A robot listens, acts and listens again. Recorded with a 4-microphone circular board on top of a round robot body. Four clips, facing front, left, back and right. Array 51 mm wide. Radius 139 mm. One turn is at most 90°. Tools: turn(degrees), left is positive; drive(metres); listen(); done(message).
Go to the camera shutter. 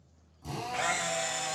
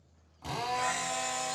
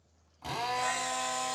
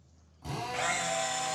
turn(degrees=-30)
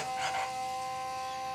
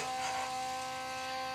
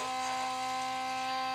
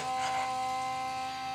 listen()
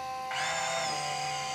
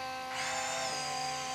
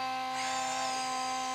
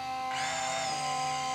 drive(metres=1.0)
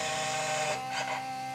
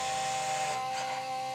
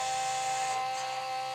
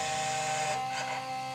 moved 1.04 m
listen()
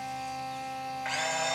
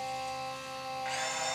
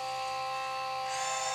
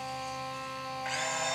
drive(metres=1.0)
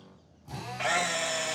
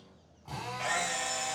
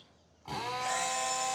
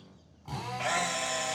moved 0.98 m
drive(metres=1.0)
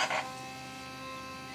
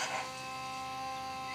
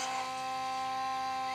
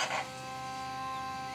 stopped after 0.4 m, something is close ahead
turn(degrees=-15)
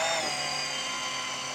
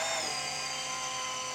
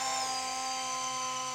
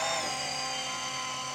done("I am next to the camera shutter.")